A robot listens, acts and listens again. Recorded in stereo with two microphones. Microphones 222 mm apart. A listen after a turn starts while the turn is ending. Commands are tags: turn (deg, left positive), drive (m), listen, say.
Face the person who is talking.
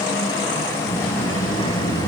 <turn deg="25"/>
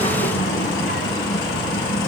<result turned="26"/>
<turn deg="130"/>
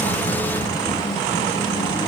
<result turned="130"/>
<say>Found it: a child speaking, straight ahead, 2 to 4 m away.</say>